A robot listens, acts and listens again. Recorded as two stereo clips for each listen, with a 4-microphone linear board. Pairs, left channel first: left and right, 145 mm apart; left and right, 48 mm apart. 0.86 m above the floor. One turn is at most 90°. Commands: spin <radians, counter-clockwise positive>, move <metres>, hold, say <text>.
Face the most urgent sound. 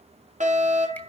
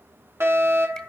spin -1.05
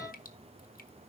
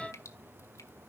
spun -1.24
hold
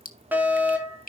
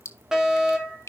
spin -0.26
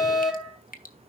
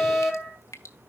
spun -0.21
say Found it: a fire alarm, straight ahead.